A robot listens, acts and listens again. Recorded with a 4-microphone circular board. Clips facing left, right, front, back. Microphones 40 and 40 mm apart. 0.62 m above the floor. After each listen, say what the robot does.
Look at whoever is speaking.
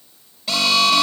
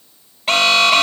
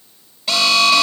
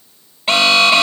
Keep listening.
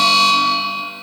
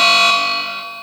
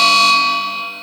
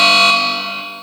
Keep listening.
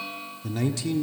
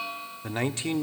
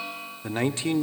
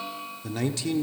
Turn 45° right.
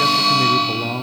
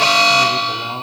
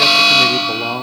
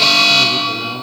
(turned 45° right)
Facing the man speaking.